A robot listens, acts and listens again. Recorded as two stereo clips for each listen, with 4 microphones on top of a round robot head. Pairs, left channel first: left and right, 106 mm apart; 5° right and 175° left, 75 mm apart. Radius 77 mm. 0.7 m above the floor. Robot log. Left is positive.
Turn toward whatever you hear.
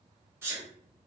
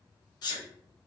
note: The sneeze: 25° right.
cmd yaw -25
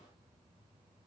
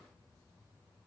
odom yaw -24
end: Facing where the sneeze came from. I can't hear it now.